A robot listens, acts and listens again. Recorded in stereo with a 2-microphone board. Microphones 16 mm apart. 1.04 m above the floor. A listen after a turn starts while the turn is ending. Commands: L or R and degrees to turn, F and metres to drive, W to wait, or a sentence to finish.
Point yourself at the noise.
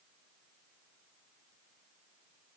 W
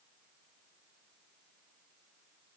W
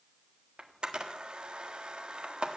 R90
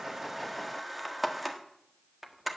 Found it: a camera shutter, straight ahead, 1 to 2 m away.